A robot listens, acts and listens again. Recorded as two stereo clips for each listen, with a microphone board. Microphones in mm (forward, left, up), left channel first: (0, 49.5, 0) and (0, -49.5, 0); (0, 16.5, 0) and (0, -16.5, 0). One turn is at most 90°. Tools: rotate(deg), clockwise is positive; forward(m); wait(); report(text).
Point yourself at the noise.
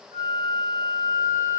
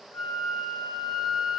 rotate(30)
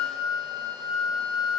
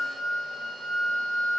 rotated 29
report("Found it: a flute, straight ahead.")